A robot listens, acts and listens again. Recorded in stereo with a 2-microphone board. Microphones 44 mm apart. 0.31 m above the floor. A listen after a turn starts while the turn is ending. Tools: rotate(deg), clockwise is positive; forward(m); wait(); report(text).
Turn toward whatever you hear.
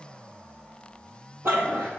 rotate(60)
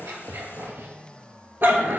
rotate(55)
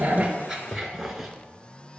report("Facing the dog barking.")